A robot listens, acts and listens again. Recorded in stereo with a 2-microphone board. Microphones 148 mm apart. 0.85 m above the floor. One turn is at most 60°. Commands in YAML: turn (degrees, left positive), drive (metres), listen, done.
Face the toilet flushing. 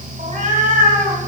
listen: true
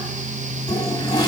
turn: 30
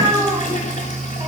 turn: 60
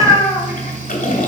turn: 60
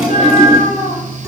done: "Facing the toilet flushing, 1 to 2 m away."